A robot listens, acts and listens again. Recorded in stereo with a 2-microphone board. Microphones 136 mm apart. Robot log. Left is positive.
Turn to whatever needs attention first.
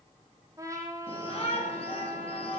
note: The shout: about 45° left or 135° left.
cmd yaw +45
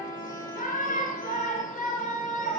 note: So it is at 85° left.
cmd yaw +85
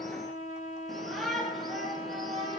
end: Facing the shout.